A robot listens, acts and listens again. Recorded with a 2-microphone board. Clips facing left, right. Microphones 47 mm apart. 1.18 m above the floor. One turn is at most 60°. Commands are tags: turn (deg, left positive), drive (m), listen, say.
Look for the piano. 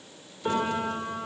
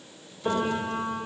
<turn deg="20"/>
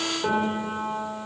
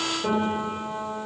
<turn deg="60"/>
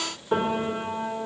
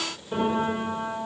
<turn deg="60"/>
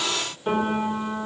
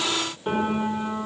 <turn deg="-10"/>
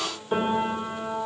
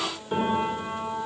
<say>Facing the piano, over 4 m away.</say>